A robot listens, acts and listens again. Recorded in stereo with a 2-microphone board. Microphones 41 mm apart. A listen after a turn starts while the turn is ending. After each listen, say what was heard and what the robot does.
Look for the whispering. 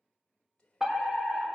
The whispering: about 20° left or 160° left. Turn 20° left.
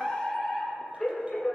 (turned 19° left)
Keep listening.
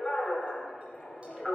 Keep listening.
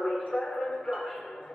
I heard whispering, but can't make it out now. It was about 5° left or 140° left.